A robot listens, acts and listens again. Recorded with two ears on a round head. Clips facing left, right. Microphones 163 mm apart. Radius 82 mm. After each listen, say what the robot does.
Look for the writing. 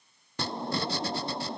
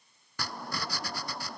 Turn 25° left.
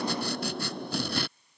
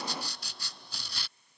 Turn 130° left.
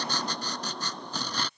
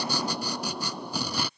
Turn 10° right.
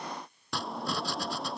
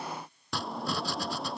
Facing the writing.